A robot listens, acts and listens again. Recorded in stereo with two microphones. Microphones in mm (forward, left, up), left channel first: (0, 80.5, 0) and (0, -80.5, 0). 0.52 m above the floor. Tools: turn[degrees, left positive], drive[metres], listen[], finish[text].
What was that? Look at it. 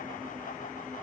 Action: listen[]
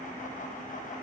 Action: listen[]
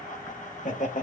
Thought: The laughter: about 50° left or 130° left.
Action: turn[50]
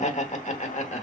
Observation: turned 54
Thought: So it is at 60° left.
Action: turn[60]
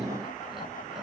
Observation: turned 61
Action: listen[]
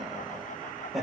Action: finish[Facing the laughter.]